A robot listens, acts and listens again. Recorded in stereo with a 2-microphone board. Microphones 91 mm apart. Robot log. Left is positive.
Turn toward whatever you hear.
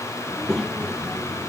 cmd yaw +30
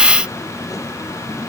note: So it is at 140° left.
cmd yaw +140
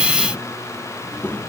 note: The child speaking is now 20° left.
cmd yaw +20
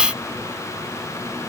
cmd idle
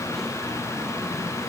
cmd idle
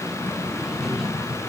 end: Facing the child speaking.